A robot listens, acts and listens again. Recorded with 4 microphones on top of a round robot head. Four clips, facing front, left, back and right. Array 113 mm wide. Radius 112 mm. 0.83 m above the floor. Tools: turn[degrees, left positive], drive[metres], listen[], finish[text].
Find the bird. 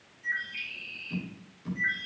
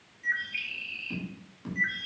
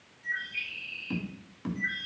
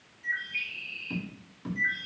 Thought: The bird: 80° left.
Action: turn[80]
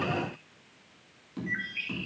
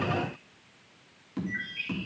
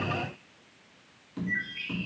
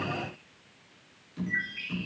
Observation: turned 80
Thought: The bird is now 15° right.
Action: turn[-15]
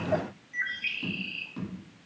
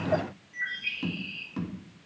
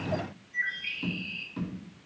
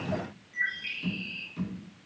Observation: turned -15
Action: finish[Facing the bird, 2 to 4 m away.]